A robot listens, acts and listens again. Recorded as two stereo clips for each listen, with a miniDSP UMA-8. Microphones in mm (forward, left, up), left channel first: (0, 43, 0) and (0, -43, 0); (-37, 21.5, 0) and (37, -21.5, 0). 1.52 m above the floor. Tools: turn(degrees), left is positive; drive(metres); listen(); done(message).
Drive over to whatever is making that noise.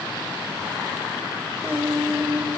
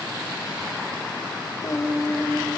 turn(degrees=-160)
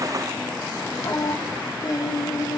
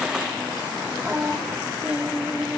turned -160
turn(degrees=45)
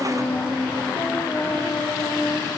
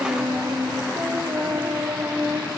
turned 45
turn(degrees=30)
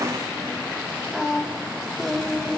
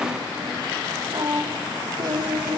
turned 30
drive(metres=1.0)
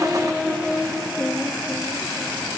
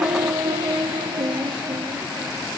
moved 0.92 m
drive(metres=1.0)
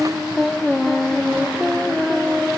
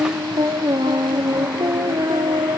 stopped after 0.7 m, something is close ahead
done("I am next to the singing.")